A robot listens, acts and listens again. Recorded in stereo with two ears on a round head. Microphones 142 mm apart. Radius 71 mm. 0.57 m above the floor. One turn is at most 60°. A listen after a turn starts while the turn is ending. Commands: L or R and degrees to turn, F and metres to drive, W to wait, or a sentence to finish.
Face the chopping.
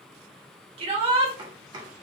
R30
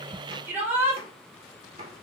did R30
R60
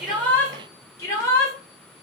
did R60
R55
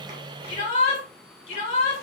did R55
W
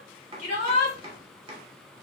R40
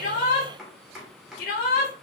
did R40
Facing the chopping, 1 to 2 m away.